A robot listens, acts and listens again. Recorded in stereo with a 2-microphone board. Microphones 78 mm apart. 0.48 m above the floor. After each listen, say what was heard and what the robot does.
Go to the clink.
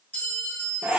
The clink: about 20° left or 160° left. Turn 20° left.
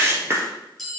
Drive 1.0 m forward.
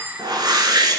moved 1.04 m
Keep listening.
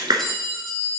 Drive 1.0 m forward.
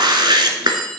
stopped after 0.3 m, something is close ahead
Arrived at the clink, straight ahead.